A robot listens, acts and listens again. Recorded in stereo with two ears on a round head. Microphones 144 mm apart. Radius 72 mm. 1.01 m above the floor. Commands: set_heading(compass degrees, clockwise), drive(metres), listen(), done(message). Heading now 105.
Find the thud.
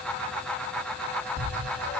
set_heading(135)
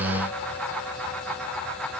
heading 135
listen()
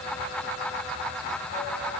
done("I heard a thud, but can't make it out now. It was about 20° left or 140° right.")